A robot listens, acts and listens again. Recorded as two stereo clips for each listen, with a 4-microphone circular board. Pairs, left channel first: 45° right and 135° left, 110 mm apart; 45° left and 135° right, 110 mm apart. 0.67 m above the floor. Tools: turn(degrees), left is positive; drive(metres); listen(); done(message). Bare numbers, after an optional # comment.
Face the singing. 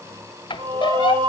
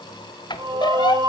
# The singing: 175° left.
turn(175)
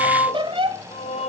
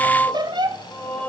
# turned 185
# The singing is now 30° right.
turn(-30)
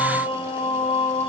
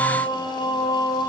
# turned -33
# The singing is now 10° right.
turn(-10)
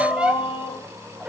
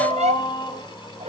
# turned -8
done("Found it: singing, straight ahead.")